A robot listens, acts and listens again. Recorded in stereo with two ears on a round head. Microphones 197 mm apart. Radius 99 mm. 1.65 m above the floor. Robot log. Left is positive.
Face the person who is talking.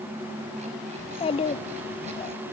note: The child speaking: about 25° left or 155° left.
cmd yaw +25
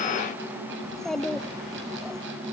end: Facing the child speaking.